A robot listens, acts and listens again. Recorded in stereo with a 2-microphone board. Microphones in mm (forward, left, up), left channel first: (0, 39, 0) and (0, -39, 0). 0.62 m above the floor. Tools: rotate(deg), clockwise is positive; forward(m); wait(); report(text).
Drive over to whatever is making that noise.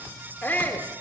rotate(-25)
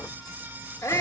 rotate(-125)
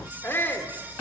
rotate(-40)
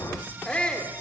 rotate(-20)
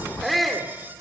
forward(1.0)
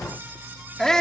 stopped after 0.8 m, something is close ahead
rotate(-15)
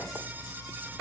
wait()
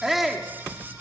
report("Arrived at the shout, straight ahead.")